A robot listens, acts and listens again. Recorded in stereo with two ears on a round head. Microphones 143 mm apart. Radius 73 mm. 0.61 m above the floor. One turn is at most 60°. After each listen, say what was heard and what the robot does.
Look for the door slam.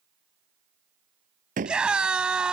The door slam: about 50° right or 130° right. Turn 50° right.
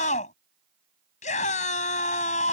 Keep listening.
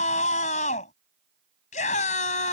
I heard a door slam, but can't make it out now. It was about straight ahead or 80° right.